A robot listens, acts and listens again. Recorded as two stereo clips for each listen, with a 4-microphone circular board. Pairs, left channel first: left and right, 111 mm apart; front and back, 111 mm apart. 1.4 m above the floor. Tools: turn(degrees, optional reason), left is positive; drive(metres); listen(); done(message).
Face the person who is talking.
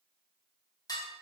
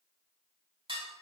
listen()
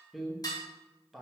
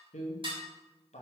done("Found it: a man speaking, straight ahead.")